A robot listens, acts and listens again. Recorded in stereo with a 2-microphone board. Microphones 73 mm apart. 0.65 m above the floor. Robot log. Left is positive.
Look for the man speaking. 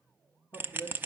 note: The man speaking: about 55° left or 125° left.
cmd yaw +55
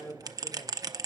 note: So it is at 50° left.
cmd yaw +50
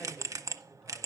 cmd idle
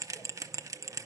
cmd idle
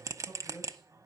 note: The man speaking is now 10° left.
cmd yaw +10
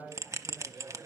end: Found it: a man speaking, straight ahead, 2 to 4 m away.